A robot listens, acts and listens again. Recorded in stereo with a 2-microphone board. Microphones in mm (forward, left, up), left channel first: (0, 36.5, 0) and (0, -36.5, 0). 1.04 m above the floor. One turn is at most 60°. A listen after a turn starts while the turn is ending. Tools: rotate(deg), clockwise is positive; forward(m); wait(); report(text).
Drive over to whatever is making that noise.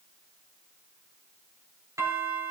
rotate(45)
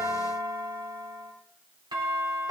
rotate(60)
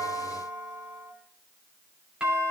rotate(15)
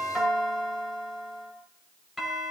forward(1.0)
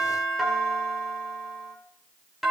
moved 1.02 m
forward(1.0)
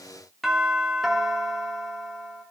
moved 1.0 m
forward(1.0)
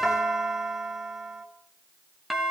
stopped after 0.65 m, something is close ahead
report("Arrived at the doorbell, straight ahead.")